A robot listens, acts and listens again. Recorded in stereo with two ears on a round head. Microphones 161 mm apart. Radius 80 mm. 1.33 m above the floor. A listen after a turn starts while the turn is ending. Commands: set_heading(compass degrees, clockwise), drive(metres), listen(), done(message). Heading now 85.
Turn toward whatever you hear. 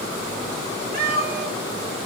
set_heading(140)
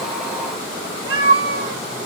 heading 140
set_heading(215)
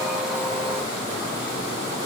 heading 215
listen()
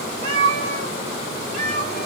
set_heading(250)
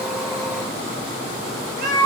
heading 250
done("Found it: a cat meowing, straight ahead.")